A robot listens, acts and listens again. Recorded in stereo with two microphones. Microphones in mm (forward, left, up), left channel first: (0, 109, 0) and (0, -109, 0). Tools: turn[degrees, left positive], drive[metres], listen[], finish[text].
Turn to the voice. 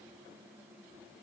Action: listen[]
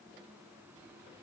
Action: listen[]
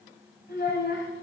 Thought: The child speaking: about 50° left or 130° left.
Action: turn[50]
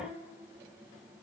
Action: listen[]
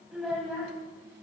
Action: finish[Found it: a child speaking, straight ahead.]